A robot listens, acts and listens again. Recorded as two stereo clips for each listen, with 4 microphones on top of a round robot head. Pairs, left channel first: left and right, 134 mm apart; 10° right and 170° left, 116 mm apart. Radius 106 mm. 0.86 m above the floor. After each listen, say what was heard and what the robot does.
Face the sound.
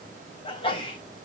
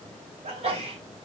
The sneeze: 140° left. Turn 140° left.
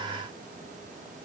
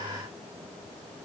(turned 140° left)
Facing where the sneeze came from. I can't hear it now.